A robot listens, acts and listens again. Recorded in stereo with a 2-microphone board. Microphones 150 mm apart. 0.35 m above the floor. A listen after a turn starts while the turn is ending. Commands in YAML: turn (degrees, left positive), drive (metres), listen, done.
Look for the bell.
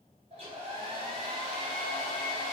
listen: true
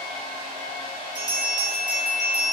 turn: 20
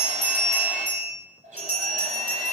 turn: 135
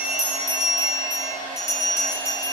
turn: 20
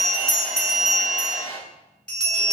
done: "Facing the bell, 1 to 2 m away."